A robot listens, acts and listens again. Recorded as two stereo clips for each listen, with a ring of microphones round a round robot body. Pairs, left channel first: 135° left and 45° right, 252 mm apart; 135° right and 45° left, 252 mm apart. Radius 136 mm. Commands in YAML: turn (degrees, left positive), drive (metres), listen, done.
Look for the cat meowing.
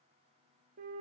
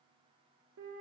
listen: true
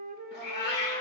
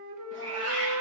turn: 80
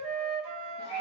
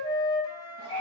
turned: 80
listen: true
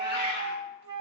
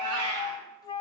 turn: 10
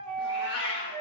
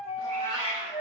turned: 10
done: "Facing the cat meowing, 2 to 4 m away."